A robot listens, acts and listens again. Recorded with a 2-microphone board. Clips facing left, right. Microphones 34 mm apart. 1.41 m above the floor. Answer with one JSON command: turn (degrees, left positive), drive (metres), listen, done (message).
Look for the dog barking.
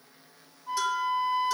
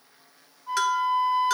{"listen": true}
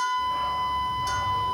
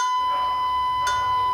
{"turn": -65}
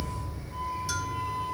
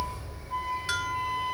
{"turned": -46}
{"turn": -30}
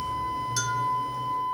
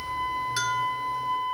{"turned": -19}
{"turn": -15}
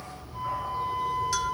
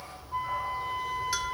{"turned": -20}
{"done": "Facing the dog barking."}